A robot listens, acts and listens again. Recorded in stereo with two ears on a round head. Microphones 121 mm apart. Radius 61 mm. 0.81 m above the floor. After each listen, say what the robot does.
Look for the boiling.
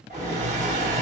Turn 20° right.
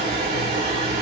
Turn 140° right.
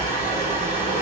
Turn 60° right.
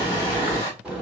Facing the boiling, 2 to 4 m away.